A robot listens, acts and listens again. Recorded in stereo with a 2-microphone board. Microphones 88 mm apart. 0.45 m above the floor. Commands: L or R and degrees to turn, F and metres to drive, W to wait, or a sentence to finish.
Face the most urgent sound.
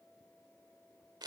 W
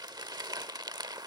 W
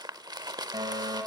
R50
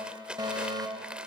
R65
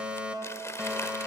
R15
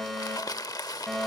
Found it: a fire alarm, straight ahead, 2 to 4 m away.